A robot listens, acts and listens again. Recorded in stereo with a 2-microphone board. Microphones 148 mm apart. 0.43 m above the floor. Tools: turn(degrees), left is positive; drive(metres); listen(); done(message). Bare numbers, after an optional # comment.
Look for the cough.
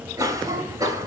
# The cough: about 20° right or 160° right.
turn(-20)
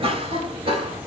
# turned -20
# So it is at 135° right.
turn(-135)
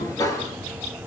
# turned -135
# The cough is now 25° left.
turn(25)
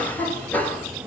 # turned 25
# The cough is now 15° left.
turn(15)
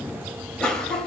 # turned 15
done("Found it: a cough, straight ahead.")